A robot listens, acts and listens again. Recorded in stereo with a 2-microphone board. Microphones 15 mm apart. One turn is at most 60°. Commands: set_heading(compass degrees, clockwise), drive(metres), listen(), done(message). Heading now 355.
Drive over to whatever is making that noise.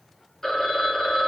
set_heading(325)
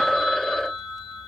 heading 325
set_heading(265)
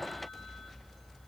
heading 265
set_heading(210)
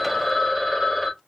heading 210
drive(1.0)
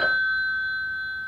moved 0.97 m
drive(1.0)
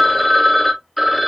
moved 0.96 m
drive(1.0)
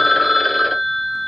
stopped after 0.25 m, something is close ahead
done("Arrived at the phone ringing, straight ahead.")